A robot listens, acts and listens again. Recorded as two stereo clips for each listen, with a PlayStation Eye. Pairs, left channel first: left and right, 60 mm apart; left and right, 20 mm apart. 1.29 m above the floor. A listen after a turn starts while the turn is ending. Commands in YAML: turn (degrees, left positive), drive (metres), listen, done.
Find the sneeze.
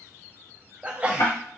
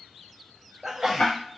turn: -20
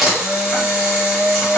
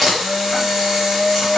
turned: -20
listen: true
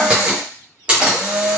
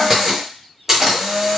done: "I heard a sneeze, but can't make it out now. It was about straight ahead or 140° right."